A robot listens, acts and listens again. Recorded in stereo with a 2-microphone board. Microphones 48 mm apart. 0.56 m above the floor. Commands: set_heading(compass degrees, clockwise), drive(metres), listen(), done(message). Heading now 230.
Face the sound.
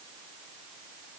listen()
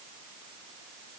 listen()
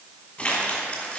set_heading(205)
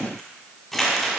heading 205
done("Found it: crumpling, straight ahead.")